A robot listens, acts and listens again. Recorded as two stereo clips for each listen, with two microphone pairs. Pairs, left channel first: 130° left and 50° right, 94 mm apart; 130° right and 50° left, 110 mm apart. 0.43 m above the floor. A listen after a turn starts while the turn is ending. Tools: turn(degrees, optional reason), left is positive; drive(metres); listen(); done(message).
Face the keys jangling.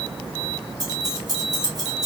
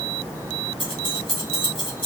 turn(degrees=-90, reason="The keys jangling: 90° right.")
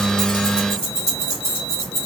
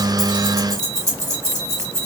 done("Facing the keys jangling, 1 to 2 m away.")